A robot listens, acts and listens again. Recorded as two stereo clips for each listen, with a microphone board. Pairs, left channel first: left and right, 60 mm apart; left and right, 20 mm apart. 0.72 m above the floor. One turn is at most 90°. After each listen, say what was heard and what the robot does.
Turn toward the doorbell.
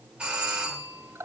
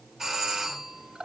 Turn 30° right.
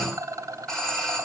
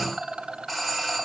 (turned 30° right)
So it is at 15° left. Turn 15° left.
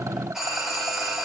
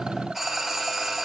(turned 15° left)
Facing the doorbell.